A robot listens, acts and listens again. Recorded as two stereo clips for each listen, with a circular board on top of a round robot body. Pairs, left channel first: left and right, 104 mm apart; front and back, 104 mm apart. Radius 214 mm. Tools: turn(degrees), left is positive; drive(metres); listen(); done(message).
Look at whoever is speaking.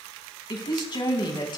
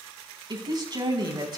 turn(degrees=135)
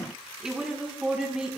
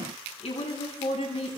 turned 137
done("Facing the woman speaking, over 4 m away.")